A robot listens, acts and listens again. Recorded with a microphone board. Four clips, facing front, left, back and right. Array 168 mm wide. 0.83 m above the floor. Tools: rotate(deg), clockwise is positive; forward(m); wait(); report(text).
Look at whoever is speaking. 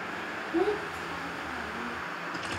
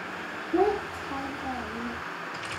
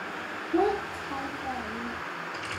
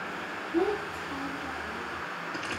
rotate(-130)
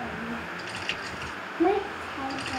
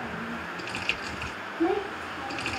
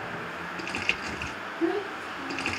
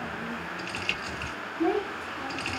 report("Found it: a child speaking, straight ahead, 1 to 2 m away.")